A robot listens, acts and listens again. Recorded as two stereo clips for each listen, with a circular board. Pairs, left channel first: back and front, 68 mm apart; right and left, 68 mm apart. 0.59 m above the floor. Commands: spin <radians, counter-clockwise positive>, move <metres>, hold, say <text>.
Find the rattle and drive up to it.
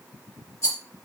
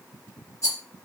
spin -2.27
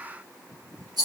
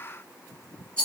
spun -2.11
spin -0.17
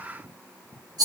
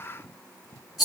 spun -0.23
move 1.0
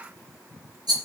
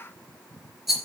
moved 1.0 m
move 1.0
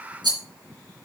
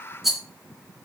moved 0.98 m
move 1.0
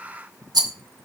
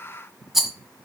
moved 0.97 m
move 1.0
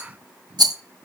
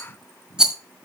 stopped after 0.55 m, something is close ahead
spin 0.17
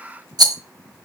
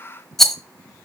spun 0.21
say Arrived at the rattle, straight ahead.